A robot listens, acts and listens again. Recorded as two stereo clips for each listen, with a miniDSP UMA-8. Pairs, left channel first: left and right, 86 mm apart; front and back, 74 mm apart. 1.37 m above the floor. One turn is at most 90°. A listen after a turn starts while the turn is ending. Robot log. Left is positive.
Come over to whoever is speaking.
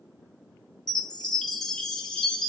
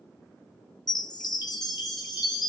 cmd idle
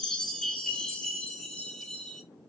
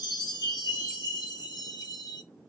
cmd idle
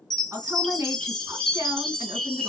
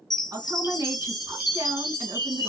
note: The woman speaking: 145° right.
cmd yaw -90
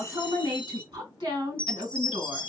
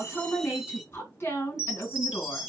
note: The woman speaking is now 60° right.
cmd yaw -60
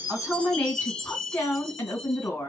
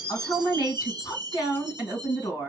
note: The woman speaking is now 25° left.
cmd yaw +25
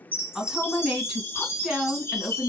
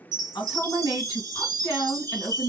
cmd fwd 1.0
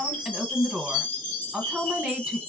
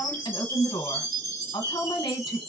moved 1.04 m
note: The woman speaking is now 10° right.
cmd yaw -10
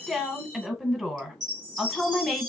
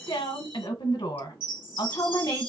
cmd fwd 1.0
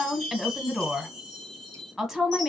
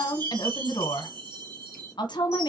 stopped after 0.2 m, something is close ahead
end: Arrived at the woman speaking, straight ahead.